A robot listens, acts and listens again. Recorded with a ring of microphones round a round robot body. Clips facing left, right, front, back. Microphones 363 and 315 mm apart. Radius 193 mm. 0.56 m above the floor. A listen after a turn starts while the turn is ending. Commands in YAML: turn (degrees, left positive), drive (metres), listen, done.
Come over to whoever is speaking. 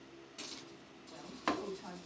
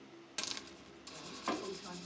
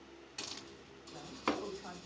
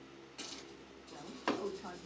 turn: 155
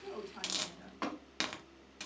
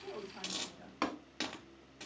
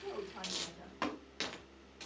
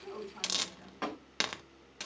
listen: true
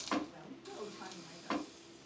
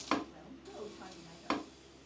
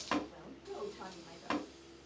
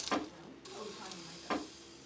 turn: 20
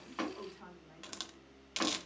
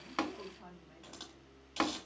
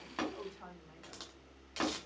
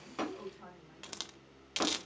drive: 1.0
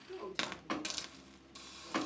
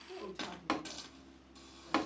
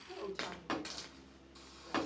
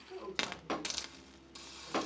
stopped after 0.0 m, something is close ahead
done: "Something is in my way. I am facing the woman speaking but have not reached it."